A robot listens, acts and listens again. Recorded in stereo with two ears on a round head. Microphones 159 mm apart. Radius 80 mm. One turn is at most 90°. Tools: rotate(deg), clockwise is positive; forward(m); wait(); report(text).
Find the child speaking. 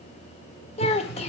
rotate(-35)
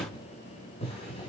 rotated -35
wait()
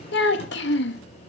rotate(-90)
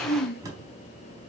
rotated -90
rotate(-55)
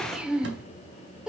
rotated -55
report("Found it: a child speaking, straight ahead.")